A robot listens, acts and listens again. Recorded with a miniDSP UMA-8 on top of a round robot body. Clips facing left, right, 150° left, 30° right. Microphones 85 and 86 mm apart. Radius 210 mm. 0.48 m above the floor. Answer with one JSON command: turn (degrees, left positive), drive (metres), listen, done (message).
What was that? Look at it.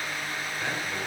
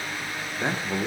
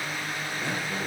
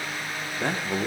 {"turn": -40}
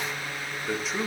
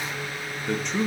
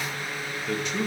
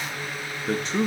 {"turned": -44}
{"done": "Found it: a man speaking, straight ahead, 1 to 2 m away."}